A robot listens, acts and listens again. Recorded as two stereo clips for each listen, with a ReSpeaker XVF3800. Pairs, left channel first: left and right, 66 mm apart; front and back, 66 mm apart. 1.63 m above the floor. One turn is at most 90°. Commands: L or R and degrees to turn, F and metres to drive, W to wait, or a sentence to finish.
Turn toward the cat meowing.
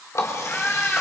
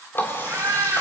L90
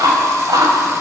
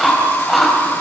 L60
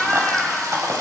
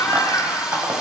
Facing the cat meowing.